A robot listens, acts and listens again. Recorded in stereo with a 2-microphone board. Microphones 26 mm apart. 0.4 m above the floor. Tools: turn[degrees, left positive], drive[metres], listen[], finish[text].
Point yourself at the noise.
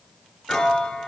Thought: The piano: about 30° left or 150° left.
Action: turn[30]
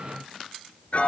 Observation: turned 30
Thought: So it is at 125° left.
Action: turn[125]
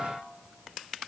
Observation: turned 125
Action: listen[]
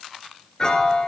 Thought: The piano is now 30° left.
Action: turn[30]
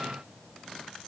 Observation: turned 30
Action: listen[]
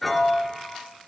Action: finish[Found it: a piano, straight ahead, 1 to 2 m away.]